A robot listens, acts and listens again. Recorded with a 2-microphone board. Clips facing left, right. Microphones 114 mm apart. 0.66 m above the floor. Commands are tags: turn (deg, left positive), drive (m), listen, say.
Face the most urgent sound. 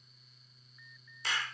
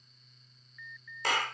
<turn deg="30"/>
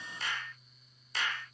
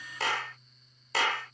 <listen/>
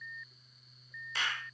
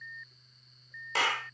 <say>Facing the alarm.</say>